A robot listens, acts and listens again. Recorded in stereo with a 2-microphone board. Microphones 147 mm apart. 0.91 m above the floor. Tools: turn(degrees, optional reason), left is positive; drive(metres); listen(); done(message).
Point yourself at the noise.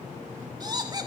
turn(degrees=-30, reason="The laughter: about 30° right or 150° right.")
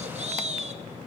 turn(degrees=-130, reason="So it is at 130° right.")
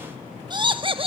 turn(degrees=-40, reason="The laughter is now 40° right.")
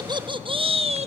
turn(degrees=-45, reason="The laughter is now 45° right.")
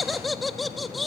done("Facing the laughter, 1 to 2 m away.")